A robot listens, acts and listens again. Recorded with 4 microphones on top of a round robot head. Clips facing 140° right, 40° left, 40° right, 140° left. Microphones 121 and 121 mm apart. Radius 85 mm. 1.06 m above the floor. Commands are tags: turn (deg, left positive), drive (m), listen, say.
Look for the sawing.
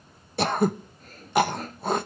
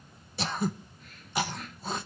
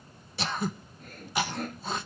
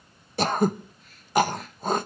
<turn deg="-85"/>
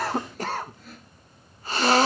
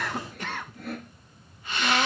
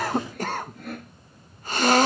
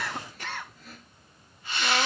<say>Facing the sawing.</say>